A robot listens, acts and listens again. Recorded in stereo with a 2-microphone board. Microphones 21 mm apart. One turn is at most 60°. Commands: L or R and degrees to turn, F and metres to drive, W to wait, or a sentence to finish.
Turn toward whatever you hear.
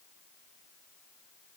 W
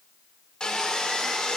L35
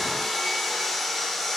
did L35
Facing the sawing, 1 to 2 m away.